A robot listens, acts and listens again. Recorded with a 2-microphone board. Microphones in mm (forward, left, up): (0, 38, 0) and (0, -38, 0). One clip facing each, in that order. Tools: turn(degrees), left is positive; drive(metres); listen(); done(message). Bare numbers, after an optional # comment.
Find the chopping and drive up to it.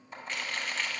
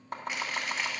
# The chopping: about 55° right or 125° right.
turn(-55)
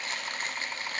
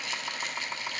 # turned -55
# So it is at 10° right.
turn(-10)
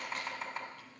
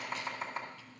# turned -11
drive(1.0)
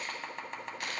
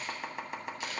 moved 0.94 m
# The chopping is now 10° right.
turn(-10)
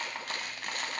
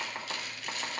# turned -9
drive(1.0)
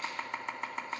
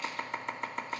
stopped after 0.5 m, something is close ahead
done("I am next to the chopping.")